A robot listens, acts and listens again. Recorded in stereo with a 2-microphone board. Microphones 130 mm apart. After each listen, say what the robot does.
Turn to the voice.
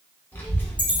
Turn 15° left.
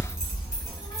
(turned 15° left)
Turn 150° left.
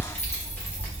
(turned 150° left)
Turn 15° left.
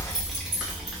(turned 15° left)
Facing the child speaking.